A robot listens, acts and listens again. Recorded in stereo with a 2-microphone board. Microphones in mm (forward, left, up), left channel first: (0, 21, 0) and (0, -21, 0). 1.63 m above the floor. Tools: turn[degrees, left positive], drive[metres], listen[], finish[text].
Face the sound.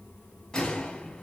Action: turn[30]
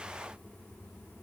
Action: listen[]
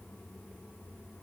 Action: finish[I heard a gunshot, but can't make it out now. It was about 15° right or 135° left.]